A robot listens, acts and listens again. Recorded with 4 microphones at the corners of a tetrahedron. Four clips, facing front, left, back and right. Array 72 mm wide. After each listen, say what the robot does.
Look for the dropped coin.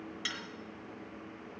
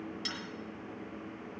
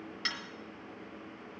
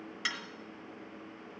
Turn 110° right.
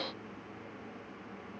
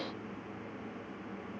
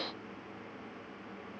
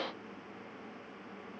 I heard a dropped coin from this way, but can't make it out now.